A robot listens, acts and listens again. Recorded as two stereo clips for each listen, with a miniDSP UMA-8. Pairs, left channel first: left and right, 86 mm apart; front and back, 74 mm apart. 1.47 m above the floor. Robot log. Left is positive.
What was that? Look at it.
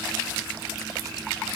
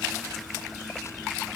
cmd idle
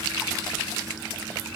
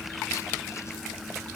cmd idle
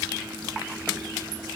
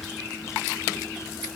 end: I can't make out anything to turn to.